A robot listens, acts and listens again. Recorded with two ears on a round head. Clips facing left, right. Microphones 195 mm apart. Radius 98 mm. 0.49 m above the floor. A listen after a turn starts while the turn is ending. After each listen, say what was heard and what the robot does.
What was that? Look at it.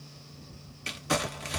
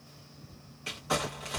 The crumpling: about 30° left or 150° left. Turn 30° left.
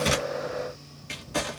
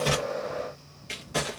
Found it: crumpling, straight ahead, 1 to 2 m away.